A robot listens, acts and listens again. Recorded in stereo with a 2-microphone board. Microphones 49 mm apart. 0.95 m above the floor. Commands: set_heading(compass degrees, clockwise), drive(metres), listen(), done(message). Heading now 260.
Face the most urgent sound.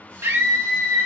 set_heading(330)
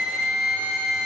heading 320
set_heading(335)
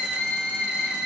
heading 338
done("Facing the scream, 1 to 2 m away.")